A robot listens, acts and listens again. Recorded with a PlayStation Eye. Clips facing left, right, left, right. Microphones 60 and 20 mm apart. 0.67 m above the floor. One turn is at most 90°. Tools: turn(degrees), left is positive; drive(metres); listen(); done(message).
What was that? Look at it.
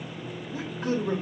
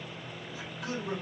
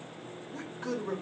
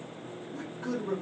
turn(degrees=40)
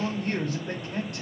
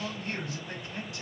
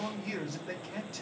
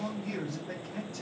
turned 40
turn(degrees=90)
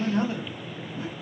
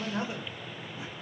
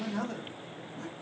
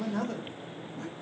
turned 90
turn(degrees=-10)
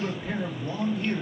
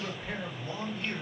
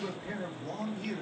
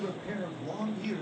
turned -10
done("Facing the man speaking, under 1 m away.")